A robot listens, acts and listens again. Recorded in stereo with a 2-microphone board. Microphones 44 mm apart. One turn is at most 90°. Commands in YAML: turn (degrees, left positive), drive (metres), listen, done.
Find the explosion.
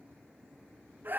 listen: true
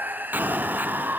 turn: -40
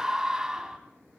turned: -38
listen: true
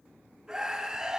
done: "I heard an explosion, but can't make it out now. It was about 5° right or 100° right."